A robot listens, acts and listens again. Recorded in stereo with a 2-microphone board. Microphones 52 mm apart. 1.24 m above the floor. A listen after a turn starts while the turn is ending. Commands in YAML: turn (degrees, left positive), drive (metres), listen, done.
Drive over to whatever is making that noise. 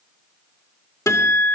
turn: 90
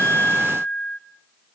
drive: 1.0
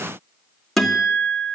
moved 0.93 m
turn: 10
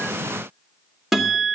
drive: 1.0
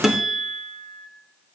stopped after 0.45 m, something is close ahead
done: "I am next to the guitar."